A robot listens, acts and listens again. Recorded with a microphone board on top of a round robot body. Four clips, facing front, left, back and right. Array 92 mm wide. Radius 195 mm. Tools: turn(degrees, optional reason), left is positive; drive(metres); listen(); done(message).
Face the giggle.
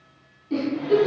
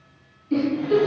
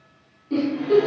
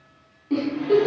turn(degrees=-90, reason="The giggle: 90° right.")
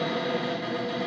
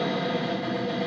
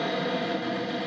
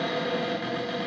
listen()
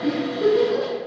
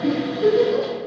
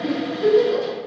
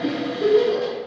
turn(degrees=-40, reason="The giggle is now 40° right.")
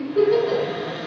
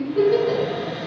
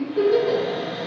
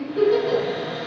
turn(degrees=20, reason="The giggle is now 20° left.")
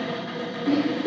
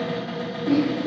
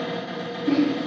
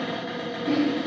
turn(degrees=10, reason="The giggle is now 10° left.")
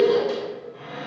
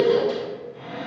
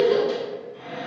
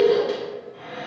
done("Facing the giggle, 1 to 2 m away.")